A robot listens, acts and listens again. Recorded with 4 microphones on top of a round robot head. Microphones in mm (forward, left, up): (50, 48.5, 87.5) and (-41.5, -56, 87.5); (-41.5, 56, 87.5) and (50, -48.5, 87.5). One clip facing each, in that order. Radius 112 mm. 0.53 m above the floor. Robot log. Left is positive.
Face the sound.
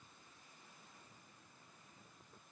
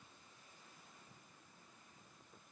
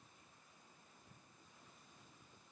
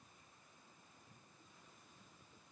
cmd idle
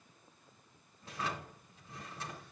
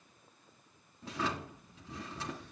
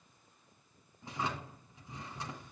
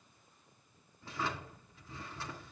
note: The drawer: 155° right.
cmd yaw -155
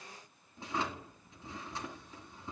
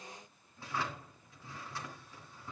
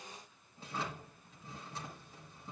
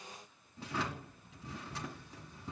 note: The drawer is now 20° right.
cmd yaw -20
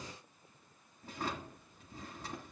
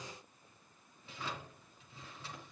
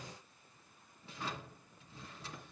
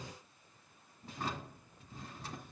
end: Found it: a drawer, straight ahead, 2 to 4 m away.